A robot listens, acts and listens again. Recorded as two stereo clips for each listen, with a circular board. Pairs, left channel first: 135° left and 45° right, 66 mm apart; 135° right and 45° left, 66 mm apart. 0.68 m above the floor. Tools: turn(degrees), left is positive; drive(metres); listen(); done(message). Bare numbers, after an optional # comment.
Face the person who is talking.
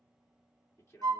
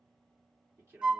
# The man speaking: 90° left.
turn(90)
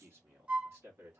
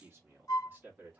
# The man speaking is now 15° right.
turn(-15)
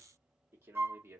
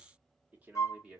# The man speaking is now 25° right.
turn(-25)
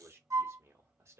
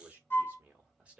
# The man speaking is now 25° right.
turn(-25)
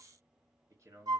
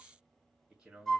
# The man speaking is now 25° right.
turn(-25)
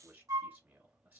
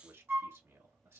# The man speaking is now 15° left.
turn(15)
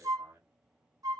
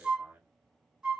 done("Found it: a man speaking, straight ahead.")